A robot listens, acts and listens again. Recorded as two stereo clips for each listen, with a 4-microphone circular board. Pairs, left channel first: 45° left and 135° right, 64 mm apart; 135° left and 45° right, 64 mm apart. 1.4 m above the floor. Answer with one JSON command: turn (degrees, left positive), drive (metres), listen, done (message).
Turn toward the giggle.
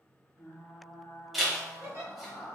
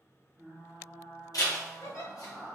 {"turn": 180}
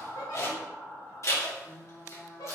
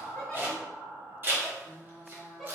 {"turn": 50}
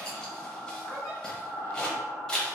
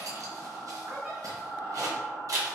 {"listen": true}
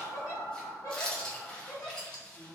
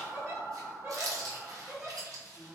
{"turn": 10}
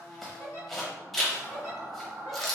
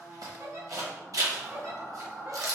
{"done": "Facing the giggle."}